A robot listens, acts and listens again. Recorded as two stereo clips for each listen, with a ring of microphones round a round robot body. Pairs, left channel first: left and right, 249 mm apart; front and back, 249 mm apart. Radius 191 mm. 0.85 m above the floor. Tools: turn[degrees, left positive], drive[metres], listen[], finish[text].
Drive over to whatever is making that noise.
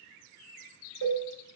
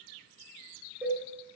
Thought: The cowbell: 95° right.
Action: turn[-95]
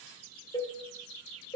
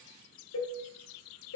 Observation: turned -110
Thought: The cowbell is now 20° left.
Action: turn[20]
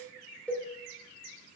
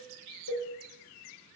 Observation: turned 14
Action: drive[1.0]
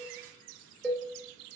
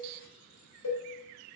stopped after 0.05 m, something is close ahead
Action: finish[Something is in my way. I am facing the cowbell but have not reached it.]